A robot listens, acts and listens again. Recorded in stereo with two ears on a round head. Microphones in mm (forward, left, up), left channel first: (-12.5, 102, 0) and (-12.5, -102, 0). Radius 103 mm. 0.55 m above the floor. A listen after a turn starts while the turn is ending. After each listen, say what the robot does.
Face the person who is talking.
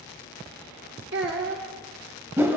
Turn 50° right.
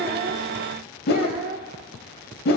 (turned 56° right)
Turn 55° right.
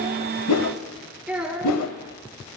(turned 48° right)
Facing the child speaking.